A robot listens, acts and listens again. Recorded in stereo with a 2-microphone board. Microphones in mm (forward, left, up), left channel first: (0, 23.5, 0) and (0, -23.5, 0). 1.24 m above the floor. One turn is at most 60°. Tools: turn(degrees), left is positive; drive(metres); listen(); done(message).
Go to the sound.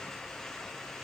listen()
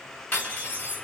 turn(degrees=40)
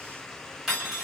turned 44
drive(metres=1.0)
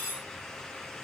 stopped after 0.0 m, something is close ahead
done("Something is in my way. I am facing the cutlery clinking but have not reached it.")